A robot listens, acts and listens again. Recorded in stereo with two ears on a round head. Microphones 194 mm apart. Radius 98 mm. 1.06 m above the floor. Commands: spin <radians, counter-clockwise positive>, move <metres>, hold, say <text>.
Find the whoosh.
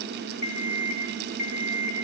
hold
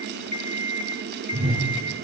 spin -0.61
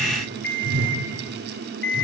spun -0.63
spin -1.92
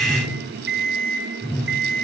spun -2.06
say Found it: a whoosh, straight ahead, over 4 m away.